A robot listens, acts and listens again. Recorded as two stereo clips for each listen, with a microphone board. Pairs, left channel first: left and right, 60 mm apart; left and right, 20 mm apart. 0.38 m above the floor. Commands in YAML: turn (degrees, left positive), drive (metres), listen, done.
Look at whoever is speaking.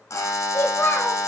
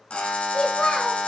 turn: 40
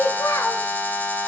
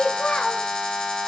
turn: 90
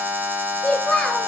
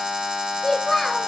turn: 20
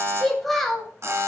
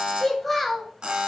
done: "Found it: a child speaking, straight ahead, 1 to 2 m away."